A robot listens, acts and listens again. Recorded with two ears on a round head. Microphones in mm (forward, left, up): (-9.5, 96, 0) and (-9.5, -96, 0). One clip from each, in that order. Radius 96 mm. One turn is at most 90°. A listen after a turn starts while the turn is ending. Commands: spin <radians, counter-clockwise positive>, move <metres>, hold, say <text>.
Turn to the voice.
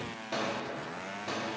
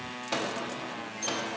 hold
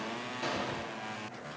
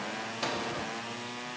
hold
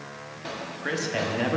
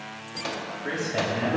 spin 0.87
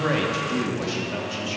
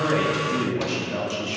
spin 0.17
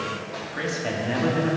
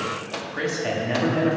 say Facing the man speaking.